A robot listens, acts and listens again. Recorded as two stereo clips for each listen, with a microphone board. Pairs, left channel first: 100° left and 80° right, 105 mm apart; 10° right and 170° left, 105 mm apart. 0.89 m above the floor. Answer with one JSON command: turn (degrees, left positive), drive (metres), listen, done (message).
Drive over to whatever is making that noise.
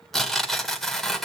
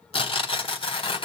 {"turn": 15}
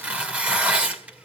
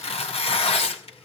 {"drive": 1.0}
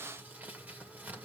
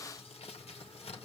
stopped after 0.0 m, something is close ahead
{"done": "Something is in my way. I am facing the tearing paper but have not reached it."}